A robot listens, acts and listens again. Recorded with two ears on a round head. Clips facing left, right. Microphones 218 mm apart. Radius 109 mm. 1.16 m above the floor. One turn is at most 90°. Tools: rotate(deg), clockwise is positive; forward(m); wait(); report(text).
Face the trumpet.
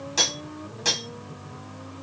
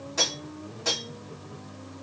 wait()
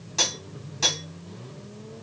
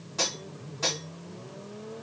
wait()
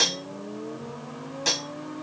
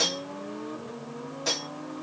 report("I can't make out a trumpet to turn to.")